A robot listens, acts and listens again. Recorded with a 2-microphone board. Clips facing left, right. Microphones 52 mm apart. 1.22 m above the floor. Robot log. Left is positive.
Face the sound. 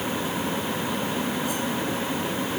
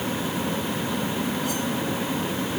cmd idle
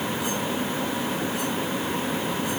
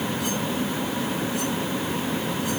cmd idle
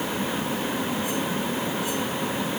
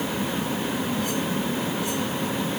end: I can't make out anything to turn to.